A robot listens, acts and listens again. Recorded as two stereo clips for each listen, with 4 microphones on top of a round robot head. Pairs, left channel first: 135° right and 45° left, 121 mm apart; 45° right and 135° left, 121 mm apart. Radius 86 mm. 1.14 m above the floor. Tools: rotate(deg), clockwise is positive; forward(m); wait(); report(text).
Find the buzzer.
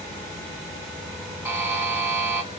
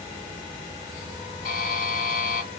rotate(30)
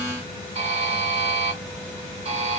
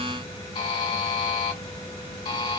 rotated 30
report("Found it: a buzzer, straight ahead, 2 to 4 m away.")